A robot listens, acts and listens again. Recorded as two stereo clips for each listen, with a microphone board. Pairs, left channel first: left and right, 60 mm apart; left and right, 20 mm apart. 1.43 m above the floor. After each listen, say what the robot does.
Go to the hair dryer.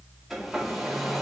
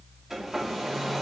Turn 30° right.
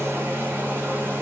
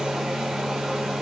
Turn 145° right.
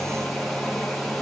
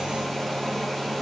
Drive 1.0 m forward.
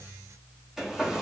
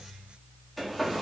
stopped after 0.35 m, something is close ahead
Something is in my way. I am facing the hair dryer but have not reached it.